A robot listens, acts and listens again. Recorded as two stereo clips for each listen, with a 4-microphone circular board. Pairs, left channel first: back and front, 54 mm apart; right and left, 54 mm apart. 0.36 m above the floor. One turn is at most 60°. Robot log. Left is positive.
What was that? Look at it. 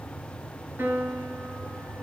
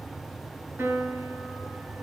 note: The piano: 45° left.
cmd yaw +45
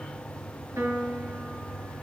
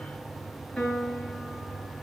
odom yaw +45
note: The piano is now 15° right.
cmd yaw -15
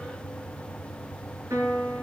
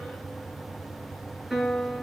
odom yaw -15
end: Found it: a piano, straight ahead.